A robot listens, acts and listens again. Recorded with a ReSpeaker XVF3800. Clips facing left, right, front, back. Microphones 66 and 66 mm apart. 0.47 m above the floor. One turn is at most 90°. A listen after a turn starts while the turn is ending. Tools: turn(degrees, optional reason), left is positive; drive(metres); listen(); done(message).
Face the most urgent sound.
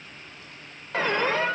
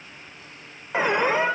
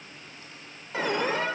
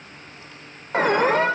turn(degrees=-90, reason="The alarm: 160° right.")
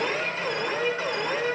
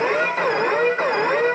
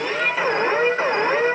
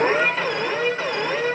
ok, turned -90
turn(degrees=-55, reason="The alarm is now 55° right.")
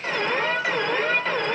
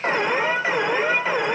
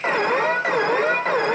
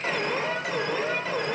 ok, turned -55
turn(degrees=-15, reason="The alarm is now 15° right.")
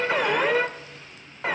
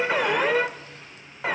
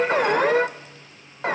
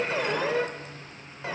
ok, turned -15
done("Facing the alarm.")